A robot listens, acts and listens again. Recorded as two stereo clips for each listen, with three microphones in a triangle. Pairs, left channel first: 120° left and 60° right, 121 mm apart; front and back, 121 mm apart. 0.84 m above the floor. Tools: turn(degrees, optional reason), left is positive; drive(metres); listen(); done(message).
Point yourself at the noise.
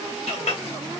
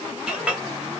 turn(degrees=100, reason="The clink: 100° left.")
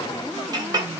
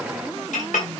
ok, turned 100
done("Facing the clink, 1 to 2 m away.")